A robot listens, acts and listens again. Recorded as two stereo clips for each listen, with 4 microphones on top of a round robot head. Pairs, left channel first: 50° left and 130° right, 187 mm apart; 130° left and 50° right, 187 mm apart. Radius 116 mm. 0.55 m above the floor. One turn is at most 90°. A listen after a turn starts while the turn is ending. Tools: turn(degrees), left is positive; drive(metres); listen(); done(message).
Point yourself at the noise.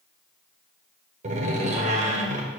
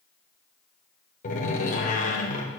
turn(degrees=90)
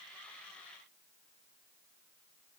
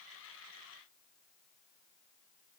turn(degrees=90)
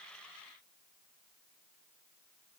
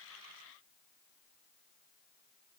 done("Facing where the door slam came from. I can't hear it now.")